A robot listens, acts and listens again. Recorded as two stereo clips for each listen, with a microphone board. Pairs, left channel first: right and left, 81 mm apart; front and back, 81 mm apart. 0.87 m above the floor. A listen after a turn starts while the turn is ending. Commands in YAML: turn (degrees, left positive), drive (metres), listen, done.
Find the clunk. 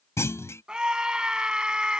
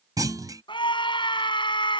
turn: -140
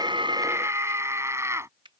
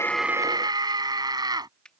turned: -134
done: "Facing where the clunk came from. I can't hear it now."